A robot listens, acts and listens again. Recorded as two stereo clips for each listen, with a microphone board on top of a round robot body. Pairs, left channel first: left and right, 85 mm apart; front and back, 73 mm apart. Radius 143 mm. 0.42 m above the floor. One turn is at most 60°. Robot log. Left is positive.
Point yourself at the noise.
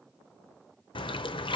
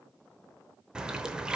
note: The splash: 100° left.
cmd yaw +60
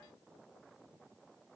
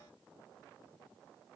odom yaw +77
note: Nothing new. It was at 25° left.
cmd yaw +25
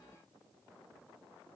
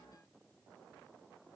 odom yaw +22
end: I heard a splash from this way, but can't make it out now.